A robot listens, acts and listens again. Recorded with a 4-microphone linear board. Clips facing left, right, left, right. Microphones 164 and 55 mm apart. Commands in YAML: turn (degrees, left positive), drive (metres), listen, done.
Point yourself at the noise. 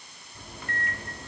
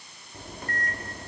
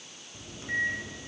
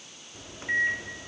turn: -40
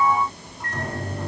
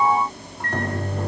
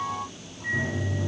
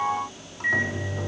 turn: -90
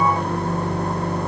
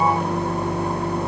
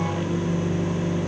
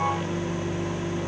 turn: -10
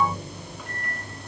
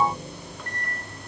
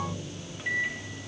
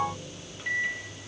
done: "Found it: a microwave, straight ahead."